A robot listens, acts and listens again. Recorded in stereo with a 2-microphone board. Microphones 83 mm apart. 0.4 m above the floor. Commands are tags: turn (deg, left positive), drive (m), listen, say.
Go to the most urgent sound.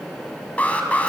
<turn deg="15"/>
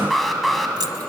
<drive m="1.0"/>
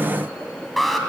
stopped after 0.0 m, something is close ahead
<say>Something is in my way. I am facing the alarm but have not reached it.</say>